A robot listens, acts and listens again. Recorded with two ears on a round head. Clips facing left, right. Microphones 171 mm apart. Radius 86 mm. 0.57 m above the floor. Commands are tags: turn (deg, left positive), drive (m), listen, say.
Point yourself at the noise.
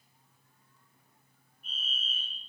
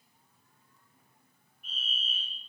<turn deg="-60"/>
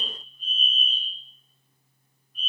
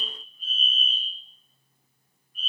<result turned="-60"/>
<say>Facing the fire alarm, over 4 m away.</say>